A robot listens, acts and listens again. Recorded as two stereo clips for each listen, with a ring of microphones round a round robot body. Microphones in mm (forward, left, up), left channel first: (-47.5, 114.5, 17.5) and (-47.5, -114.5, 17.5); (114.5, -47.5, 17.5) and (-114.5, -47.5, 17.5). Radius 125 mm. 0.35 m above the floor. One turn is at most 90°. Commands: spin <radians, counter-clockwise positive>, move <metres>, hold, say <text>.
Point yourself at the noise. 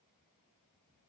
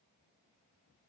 hold
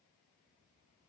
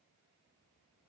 hold
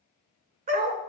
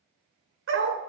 spin -1.57
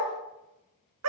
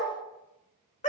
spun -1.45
spin -1.05
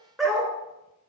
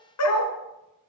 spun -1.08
say Found it: a dog barking, straight ahead.